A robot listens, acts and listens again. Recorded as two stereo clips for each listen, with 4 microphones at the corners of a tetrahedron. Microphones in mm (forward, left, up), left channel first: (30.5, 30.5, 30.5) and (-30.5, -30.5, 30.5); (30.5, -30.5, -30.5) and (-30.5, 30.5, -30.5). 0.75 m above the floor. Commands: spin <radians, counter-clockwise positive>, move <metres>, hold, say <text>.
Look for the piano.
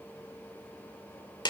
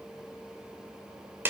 hold
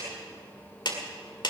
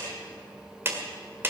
hold
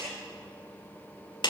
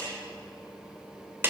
say I can't make out a piano, only a clap.